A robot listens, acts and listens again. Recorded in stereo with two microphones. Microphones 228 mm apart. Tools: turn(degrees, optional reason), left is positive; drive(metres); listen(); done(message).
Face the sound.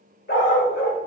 turn(degrees=55, reason="The dog barking: about 55° left or 125° left.")
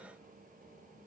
listen()
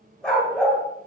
done("Found it: a dog barking, straight ahead.")